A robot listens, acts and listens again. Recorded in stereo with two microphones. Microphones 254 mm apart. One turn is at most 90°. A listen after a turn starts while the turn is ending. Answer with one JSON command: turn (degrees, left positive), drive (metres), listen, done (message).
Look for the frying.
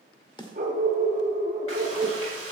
{"turn": 65}
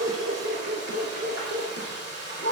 {"turn": 50}
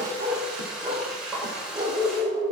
{"done": "Found it: frying, straight ahead."}